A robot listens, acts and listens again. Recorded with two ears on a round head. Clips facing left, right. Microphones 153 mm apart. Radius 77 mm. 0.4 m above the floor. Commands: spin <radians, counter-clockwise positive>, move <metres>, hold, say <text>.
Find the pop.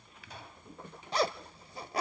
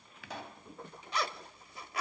spin -1.05
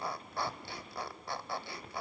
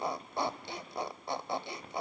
hold
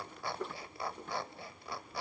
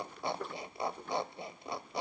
say I heard a pop, but can't make it out now. It was about straight ahead or 60° right.